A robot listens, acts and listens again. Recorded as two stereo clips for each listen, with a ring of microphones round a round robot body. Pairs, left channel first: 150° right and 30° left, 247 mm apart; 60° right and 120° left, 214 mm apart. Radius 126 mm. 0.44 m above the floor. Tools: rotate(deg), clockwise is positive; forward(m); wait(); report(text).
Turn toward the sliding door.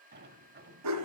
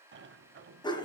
rotate(-80)
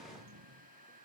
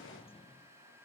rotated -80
report("Found it: a sliding door, straight ahead.")